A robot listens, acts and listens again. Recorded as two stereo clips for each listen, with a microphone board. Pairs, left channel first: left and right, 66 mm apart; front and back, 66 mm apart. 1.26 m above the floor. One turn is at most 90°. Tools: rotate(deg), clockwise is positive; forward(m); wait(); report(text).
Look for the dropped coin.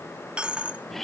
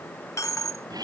rotate(20)
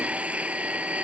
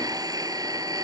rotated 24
report("I heard a dropped coin from this way, but can't make it out now.")